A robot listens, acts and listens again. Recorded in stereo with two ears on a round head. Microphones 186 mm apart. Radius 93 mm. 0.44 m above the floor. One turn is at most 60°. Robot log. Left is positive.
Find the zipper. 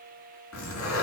cmd yaw +60
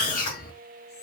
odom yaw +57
note: So it is at 40° left.
cmd yaw +40
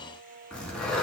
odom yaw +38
end: Facing the zipper, 2 to 4 m away.